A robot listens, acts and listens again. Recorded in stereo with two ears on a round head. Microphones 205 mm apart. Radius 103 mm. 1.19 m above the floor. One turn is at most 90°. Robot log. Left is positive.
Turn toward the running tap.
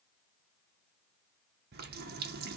note: The running tap: about 45° right or 135° right.
cmd yaw -45
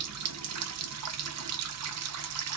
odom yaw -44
note: So it is at 85° right.
cmd yaw -85
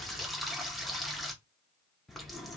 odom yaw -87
end: Found it: a running tap, straight ahead.